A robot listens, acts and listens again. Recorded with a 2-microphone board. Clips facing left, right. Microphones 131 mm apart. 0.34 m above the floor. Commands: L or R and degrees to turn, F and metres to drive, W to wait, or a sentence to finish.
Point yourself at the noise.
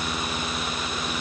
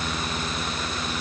W
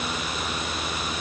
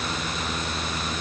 W
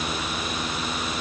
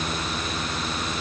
I can't make out anything to turn to.